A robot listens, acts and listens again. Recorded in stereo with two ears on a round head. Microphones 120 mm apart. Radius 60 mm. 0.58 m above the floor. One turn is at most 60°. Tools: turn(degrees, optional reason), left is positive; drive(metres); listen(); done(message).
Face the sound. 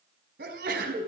turn(degrees=-60)
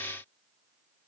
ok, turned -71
turn(degrees=-20, reason="Nothing new. It was at 20° right.")
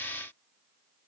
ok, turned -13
done("Facing where the sneeze came from. I can't hear it now.")